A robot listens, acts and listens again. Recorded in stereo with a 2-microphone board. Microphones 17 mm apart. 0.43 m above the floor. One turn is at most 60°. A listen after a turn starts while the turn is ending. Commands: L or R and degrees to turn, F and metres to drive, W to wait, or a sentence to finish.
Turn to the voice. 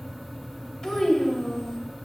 L40
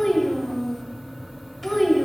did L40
L10
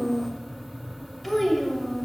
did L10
Facing the child speaking, 1 to 2 m away.